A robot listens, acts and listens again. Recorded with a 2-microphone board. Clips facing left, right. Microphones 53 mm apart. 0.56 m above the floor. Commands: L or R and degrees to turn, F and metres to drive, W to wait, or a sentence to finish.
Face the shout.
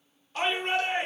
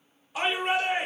R30
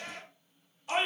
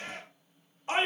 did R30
R140
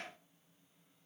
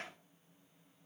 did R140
W
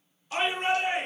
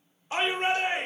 R35
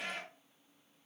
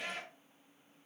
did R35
Facing the shout, 1 to 2 m away.